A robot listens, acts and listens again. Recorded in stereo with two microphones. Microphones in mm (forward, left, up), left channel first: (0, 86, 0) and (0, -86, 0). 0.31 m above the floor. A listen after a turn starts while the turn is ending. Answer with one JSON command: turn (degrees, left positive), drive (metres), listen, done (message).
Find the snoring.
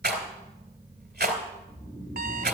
{"turn": 25}
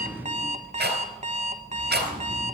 {"listen": true}
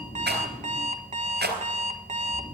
{"turn": 130}
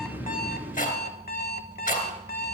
{"listen": true}
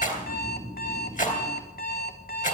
{"done": "Facing the snoring, 2 to 4 m away."}